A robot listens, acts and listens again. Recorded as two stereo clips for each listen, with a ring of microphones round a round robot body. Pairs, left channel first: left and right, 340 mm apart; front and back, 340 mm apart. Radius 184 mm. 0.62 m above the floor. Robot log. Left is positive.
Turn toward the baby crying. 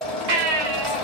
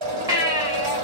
note: The baby crying: 100° right.
cmd yaw -100
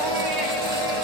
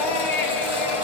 cmd idle
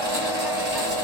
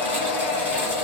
cmd idle
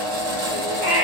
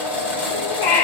end: Facing the baby crying.